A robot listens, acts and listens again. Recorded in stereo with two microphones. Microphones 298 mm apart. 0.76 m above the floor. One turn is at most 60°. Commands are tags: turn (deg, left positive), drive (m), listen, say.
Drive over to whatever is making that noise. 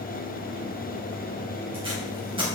<turn deg="-20"/>
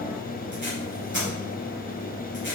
<turn deg="-60"/>
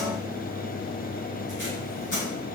<turn deg="-60"/>
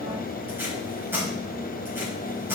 <drive m="1.0"/>
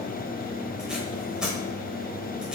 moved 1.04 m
<drive m="1.0"/>
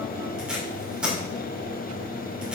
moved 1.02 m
<drive m="1.0"/>
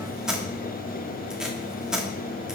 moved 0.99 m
<drive m="1.0"/>
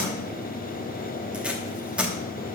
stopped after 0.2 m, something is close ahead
<say>Arrived at the tape being pulled, straight ahead.</say>